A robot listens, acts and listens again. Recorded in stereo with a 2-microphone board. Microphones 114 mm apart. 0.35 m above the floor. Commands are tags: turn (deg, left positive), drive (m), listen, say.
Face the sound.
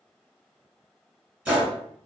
<turn deg="-30"/>
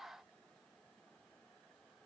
<listen/>
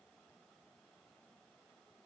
<say>I heard a gunshot, but can't make it out now. It was about 20° left or 140° right.</say>